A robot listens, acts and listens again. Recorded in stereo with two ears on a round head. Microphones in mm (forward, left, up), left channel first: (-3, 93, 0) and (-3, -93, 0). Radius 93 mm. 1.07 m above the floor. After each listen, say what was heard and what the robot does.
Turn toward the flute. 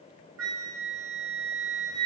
The flute: about 65° right or 115° right. Turn 65° right.
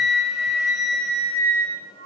So it is at 50° right. Turn 50° right.
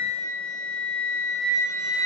Facing the flute.